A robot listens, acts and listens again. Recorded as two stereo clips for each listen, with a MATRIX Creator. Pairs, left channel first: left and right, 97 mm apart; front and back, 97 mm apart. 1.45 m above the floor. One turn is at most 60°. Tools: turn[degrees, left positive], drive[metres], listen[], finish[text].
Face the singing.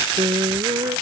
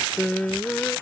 Thought: The singing: 75° right.
Action: turn[-60]
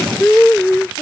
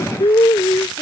Thought: The singing is now 10° left.
Action: turn[10]
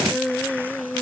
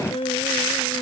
Action: finish[Found it: singing, straight ahead.]